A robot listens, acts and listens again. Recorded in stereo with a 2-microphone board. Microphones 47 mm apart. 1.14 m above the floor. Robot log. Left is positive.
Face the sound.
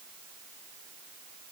cmd idle
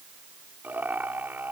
note: The laughter: about 40° right or 140° right.
cmd yaw -40
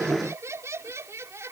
note: So it is at 95° right.
cmd yaw -95
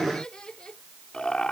note: The laughter is now 20° left.
cmd yaw +20
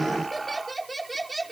end: Facing the laughter.